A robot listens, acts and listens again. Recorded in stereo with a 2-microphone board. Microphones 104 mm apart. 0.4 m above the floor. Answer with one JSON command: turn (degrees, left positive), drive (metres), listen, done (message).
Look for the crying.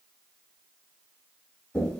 {"listen": true}
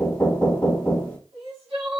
{"turn": -65}
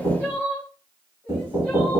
{"turn": -15}
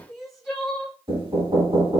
{"done": "Found it: crying, straight ahead, 2 to 4 m away."}